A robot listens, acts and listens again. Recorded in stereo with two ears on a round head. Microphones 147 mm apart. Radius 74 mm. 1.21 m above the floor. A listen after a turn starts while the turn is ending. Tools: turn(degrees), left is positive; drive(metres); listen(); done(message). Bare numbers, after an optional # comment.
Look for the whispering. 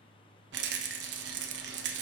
listen()
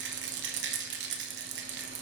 listen()
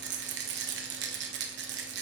done("I can't make out whispering to turn to.")